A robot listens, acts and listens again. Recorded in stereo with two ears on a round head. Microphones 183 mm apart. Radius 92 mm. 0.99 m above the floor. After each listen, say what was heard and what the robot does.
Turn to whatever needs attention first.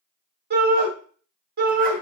The shout: about 45° right or 135° right. Turn 45° right.
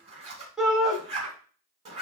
Facing the shout, 1 to 2 m away.